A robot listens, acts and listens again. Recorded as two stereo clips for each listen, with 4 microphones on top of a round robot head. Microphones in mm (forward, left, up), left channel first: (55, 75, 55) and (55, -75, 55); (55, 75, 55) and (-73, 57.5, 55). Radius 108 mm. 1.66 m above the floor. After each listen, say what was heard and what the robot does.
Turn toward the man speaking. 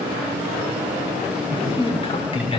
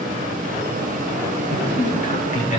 The man speaking: 35° left. Turn 35° left.
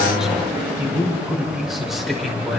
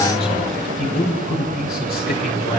Facing the man speaking, over 4 m away.